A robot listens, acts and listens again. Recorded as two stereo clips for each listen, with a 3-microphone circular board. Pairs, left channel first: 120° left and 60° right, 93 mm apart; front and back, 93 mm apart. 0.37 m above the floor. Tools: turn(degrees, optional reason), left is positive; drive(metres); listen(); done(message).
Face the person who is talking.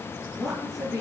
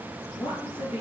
turn(degrees=30, reason="The woman speaking: 30° left.")
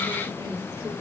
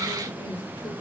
done("Found it: a woman speaking, straight ahead, over 4 m away.")